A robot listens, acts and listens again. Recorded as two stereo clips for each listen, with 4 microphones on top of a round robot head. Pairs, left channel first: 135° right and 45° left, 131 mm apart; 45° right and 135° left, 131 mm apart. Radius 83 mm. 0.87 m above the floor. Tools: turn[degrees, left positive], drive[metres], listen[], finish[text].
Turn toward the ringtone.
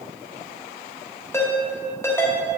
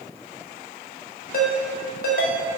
Thought: The ringtone: 65° right.
Action: turn[-65]
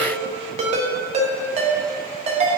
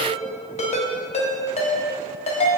Action: finish[Facing the ringtone, 1 to 2 m away.]